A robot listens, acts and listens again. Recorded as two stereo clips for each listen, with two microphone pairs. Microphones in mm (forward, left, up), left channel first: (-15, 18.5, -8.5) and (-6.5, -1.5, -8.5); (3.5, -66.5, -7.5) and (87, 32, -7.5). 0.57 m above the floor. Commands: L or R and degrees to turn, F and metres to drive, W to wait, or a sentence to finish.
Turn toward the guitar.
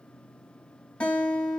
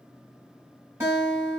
L120
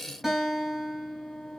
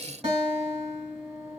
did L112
L10
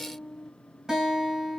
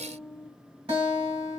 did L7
Found it: a guitar, straight ahead.